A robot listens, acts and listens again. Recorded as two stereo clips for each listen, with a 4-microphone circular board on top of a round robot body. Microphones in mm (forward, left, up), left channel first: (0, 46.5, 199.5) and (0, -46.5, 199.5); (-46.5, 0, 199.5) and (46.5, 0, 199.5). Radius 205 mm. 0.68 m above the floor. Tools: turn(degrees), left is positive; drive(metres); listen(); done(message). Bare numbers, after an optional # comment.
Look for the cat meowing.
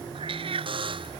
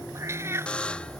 # The cat meowing: 65° right.
turn(-65)
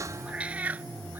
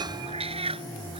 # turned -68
# The cat meowing is now 15° right.
turn(-15)
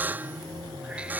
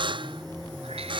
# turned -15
listen()
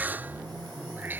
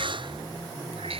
# The cat meowing is now 20° right.
turn(-20)
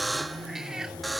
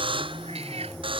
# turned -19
listen()
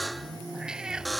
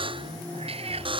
done("Found it: a cat meowing, straight ahead.")